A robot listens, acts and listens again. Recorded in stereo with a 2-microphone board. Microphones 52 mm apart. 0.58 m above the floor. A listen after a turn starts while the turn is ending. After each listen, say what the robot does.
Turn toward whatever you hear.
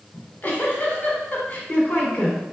Turn 40° left.
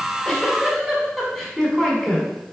Found it: a giggle, straight ahead, 1 to 2 m away.